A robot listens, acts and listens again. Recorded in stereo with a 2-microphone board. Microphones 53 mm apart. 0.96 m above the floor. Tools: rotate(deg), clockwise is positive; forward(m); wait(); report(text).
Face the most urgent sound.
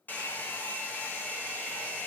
wait()
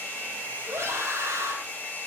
rotate(60)
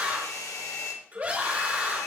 rotate(35)
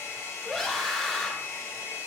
report("Facing the scream, 1 to 2 m away.")